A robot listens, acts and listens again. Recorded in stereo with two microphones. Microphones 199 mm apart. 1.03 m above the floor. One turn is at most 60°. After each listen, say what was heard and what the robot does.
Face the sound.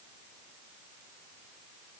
Keep listening.
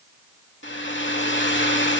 The hair dryer: about 70° left or 110° left. Turn 60° left.
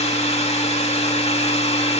So it is at 35° left. Turn 35° left.
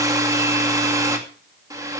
The hair dryer is now 15° right. Turn 15° right.
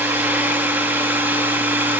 The hair dryer is now 10° right. Turn 10° right.
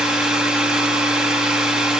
Facing the hair dryer.